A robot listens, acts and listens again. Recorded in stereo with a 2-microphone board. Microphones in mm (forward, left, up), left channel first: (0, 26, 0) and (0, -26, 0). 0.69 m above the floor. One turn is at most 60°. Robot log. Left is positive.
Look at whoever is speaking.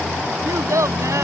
note: The child speaking: about 75° right or 105° right.
cmd yaw -60
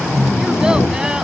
cmd idle
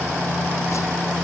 cmd idle
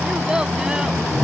note: So it is at 15° right.
cmd yaw -15
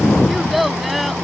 end: Facing the child speaking.